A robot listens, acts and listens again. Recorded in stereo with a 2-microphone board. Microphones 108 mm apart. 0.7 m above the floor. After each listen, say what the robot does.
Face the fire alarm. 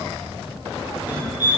Turn 20° right.
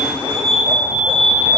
Found it: a fire alarm, straight ahead, 2 to 4 m away.